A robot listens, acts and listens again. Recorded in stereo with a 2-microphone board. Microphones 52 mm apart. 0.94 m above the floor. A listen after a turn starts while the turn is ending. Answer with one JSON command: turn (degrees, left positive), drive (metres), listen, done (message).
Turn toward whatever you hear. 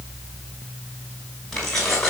{"turn": 30}
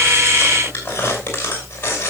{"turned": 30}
{"turn": 140}
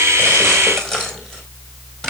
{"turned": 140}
{"done": "Found it: keys jangling, straight ahead."}